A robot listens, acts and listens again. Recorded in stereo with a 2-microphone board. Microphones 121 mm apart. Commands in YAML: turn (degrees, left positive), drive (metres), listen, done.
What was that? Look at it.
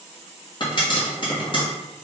turn: 40
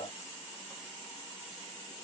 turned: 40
listen: true
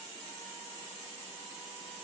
done: "I heard a pop, but can't make it out now. It was about straight ahead or 100° left."